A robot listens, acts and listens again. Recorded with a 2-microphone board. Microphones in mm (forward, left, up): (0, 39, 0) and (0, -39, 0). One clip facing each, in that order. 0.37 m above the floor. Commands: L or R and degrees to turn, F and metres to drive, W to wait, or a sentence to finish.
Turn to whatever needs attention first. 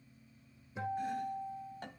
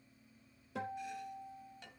W
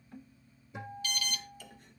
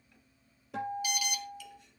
R30
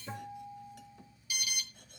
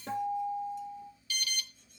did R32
L15
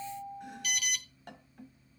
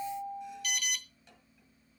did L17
Facing the alarm.